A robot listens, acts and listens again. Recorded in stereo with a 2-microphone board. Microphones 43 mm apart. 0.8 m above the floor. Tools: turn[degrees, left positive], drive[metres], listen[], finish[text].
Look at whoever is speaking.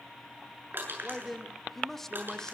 Action: turn[30]
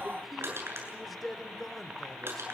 Action: turn[30]
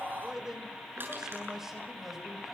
Action: finish[Facing the man speaking.]